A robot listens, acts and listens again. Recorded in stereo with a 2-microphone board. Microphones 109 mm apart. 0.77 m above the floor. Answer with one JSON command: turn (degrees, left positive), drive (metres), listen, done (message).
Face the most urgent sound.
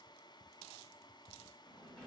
{"listen": true}
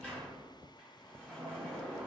{"listen": true}
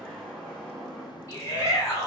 {"turn": 25}
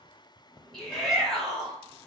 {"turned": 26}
{"done": "Facing the shout."}